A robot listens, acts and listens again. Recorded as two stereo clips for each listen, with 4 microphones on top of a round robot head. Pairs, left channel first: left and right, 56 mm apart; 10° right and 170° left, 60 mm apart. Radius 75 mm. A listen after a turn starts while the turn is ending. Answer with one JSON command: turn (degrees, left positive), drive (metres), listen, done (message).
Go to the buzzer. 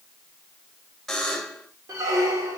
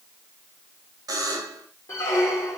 {"turn": 175}
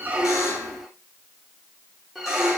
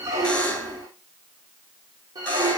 {"listen": true}
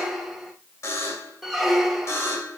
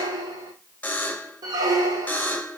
{"turn": 55}
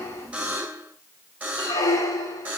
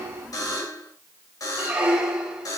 {"turn": -25}
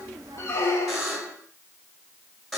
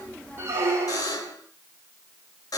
{"drive": 1.0}
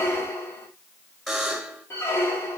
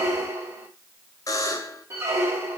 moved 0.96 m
{"drive": 1.0}
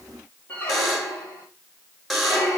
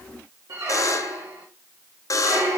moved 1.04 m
{"drive": 1.0}
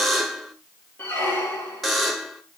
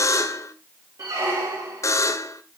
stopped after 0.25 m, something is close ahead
{"done": "Arrived at the buzzer, straight ahead."}